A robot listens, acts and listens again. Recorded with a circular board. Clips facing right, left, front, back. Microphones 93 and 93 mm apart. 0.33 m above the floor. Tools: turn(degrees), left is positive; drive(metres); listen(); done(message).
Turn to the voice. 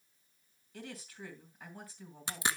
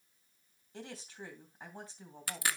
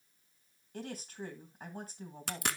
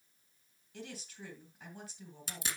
turn(degrees=35)
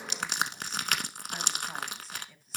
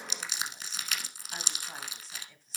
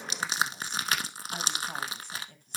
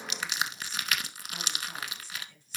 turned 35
done("Facing the woman speaking, 2 to 4 m away.")